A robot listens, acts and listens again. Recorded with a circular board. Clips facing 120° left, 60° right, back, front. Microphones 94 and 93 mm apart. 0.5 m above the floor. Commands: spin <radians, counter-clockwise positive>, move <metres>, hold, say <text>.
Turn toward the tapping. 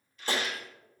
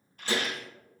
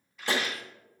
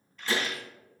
spin 2.79
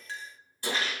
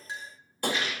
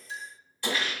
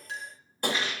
spin -0.61
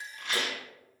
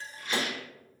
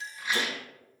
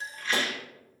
hold
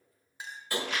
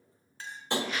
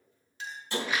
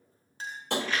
say Found it: tapping, straight ahead, 1 to 2 m away.